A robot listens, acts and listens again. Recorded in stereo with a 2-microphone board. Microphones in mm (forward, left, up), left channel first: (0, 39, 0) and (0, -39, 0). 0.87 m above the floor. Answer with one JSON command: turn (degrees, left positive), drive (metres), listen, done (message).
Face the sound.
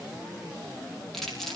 {"turn": 30}
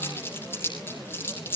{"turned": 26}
{"turn": 150}
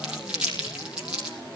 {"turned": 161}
{"turn": -15}
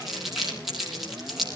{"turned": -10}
{"done": "Found it: crumpling, straight ahead, over 4 m away."}